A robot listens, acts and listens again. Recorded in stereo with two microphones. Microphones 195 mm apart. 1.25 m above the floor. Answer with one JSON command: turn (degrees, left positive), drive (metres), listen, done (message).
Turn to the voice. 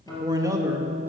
{"turn": -30}
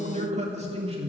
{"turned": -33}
{"turn": -150}
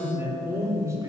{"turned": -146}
{"turn": -15}
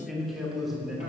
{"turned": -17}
{"done": "Found it: a man speaking, straight ahead, 2 to 4 m away."}